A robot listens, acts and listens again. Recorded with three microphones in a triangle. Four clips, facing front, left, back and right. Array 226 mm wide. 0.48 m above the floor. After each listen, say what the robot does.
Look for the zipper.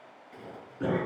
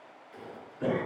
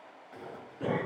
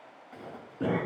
Turn 115° right.
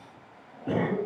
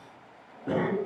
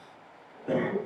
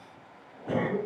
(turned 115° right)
Keep listening.
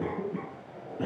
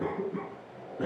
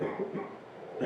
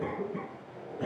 Found it: a zipper, straight ahead.